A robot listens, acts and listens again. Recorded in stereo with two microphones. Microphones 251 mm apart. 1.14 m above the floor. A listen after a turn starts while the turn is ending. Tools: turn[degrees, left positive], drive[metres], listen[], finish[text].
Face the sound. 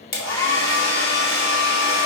Action: turn[90]
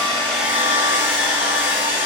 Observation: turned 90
Thought: So it is at 10° right.
Action: turn[-10]
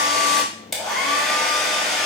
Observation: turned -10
Action: finish[Found it: a hair dryer, straight ahead.]